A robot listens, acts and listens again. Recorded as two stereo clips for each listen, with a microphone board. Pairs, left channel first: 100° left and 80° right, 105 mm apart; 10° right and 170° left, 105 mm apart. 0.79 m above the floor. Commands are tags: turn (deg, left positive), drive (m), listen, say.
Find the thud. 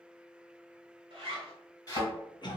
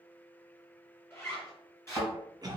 <turn deg="50"/>
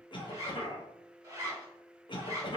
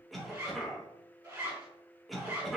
<say>I heard a thud from this way, but can't make it out now.</say>